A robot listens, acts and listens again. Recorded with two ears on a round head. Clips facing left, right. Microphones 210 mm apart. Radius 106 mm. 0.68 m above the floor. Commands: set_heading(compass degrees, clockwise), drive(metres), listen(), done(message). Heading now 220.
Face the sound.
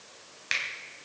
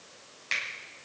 set_heading(200)
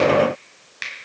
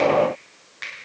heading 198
set_heading(58)
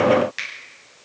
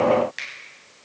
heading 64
done("Facing the finger snap.")